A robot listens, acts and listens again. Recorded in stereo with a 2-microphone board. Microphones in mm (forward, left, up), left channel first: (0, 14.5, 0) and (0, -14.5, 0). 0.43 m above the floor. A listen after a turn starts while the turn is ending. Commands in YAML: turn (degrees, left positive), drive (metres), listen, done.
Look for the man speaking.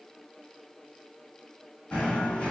listen: true
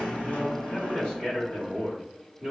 turn: 15
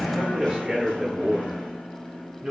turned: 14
turn: -25
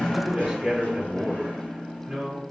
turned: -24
turn: -10
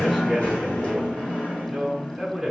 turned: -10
done: "Facing the man speaking, 1 to 2 m away."